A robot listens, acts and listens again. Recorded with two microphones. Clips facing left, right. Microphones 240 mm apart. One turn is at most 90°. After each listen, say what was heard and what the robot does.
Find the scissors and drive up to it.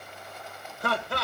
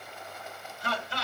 Keep listening.
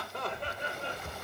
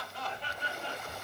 Keep listening.
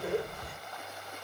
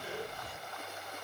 I can't make out scissors to turn to.